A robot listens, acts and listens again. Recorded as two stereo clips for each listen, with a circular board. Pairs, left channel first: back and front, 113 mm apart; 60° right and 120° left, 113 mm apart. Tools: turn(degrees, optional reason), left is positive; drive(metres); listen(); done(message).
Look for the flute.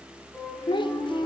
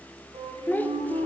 turn(degrees=100, reason="The flute: 100° left.")
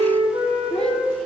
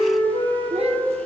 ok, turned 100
turn(degrees=-30, reason="The flute is now 30° right.")
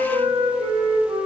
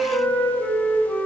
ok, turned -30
turn(degrees=10, reason="The flute is now 10° left.")
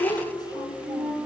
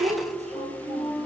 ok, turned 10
done("Found it: a flute, straight ahead.")